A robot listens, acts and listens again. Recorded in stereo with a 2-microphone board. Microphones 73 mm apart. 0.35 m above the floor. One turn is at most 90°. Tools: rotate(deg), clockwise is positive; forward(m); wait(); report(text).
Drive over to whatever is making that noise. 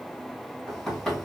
rotate(-30)
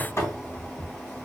rotate(-90)
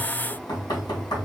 rotate(-80)
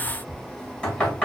rotate(-15)
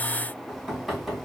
forward(1.0)
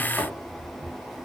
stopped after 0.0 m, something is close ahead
report("Blocked. The knocking is further on, straight ahead.")